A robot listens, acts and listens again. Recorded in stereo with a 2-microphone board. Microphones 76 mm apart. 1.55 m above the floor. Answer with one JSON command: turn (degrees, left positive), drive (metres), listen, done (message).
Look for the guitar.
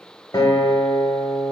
{"turn": 60}
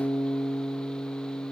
{"turn": 15}
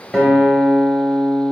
{"done": "Facing the guitar, 1 to 2 m away."}